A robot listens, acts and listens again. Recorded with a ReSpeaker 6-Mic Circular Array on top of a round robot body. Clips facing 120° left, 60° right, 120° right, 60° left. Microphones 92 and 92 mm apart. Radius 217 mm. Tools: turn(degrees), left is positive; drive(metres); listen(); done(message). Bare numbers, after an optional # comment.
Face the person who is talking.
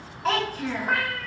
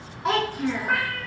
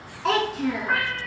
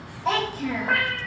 # The child speaking: 140° right.
turn(-140)
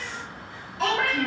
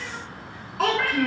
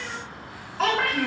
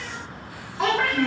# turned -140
# The child speaking is now 30° right.
turn(-30)
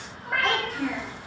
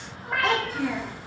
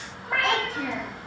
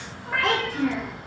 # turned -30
# The child speaking is now 10° left.
turn(10)
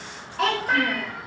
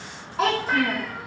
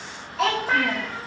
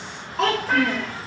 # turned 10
done("Facing the child speaking.")